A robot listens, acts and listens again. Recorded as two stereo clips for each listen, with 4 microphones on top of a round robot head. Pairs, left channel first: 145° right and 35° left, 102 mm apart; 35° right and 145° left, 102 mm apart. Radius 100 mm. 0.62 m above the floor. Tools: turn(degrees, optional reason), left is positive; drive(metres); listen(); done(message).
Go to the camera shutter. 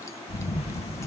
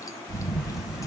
turn(degrees=-130, reason="The camera shutter: 130° right.")
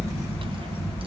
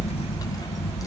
turn(degrees=-30, reason="The camera shutter is now 30° right.")
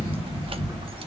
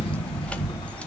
drive(metres=1.0)
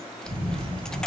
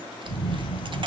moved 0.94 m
drive(metres=1.0)
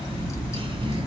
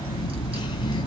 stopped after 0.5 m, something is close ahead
done("Arrived at the camera shutter, straight ahead.")